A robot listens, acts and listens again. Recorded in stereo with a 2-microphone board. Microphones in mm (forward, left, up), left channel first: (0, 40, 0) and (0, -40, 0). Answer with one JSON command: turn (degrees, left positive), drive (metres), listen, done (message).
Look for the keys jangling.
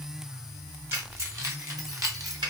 {"turn": -50}
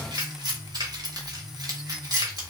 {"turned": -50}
{"turn": -50}
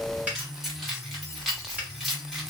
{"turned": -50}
{"done": "Facing the keys jangling, 2 to 4 m away."}